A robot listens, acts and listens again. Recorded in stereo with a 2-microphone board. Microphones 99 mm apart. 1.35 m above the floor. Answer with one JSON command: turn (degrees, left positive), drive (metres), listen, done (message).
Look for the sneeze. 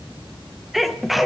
{"turn": 30}
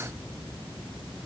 {"listen": true}
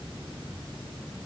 {"done": "I heard a sneeze, but can't make it out now. It was about 30° right or 150° left."}